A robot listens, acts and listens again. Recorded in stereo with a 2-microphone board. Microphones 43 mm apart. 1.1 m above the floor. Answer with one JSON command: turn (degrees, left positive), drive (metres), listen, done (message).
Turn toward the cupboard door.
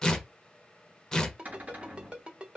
{"turn": -40}
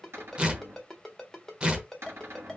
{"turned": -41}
{"turn": -100}
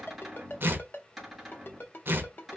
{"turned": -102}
{"done": "Found it: a cupboard door, straight ahead."}